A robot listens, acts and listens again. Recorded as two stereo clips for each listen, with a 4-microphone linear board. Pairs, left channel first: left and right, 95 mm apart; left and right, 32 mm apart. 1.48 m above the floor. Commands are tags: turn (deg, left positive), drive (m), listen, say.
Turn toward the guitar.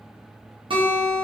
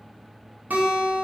<turn deg="-65"/>
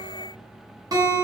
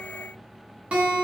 <turn deg="-40"/>
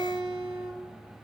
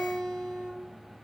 <say>Facing the guitar, 1 to 2 m away.</say>